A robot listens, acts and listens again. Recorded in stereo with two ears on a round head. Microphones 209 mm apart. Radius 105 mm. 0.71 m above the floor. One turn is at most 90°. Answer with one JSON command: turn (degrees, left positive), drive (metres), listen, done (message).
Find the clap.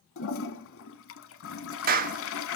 {"turn": -40}
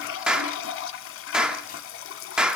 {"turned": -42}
{"done": "Facing the clap."}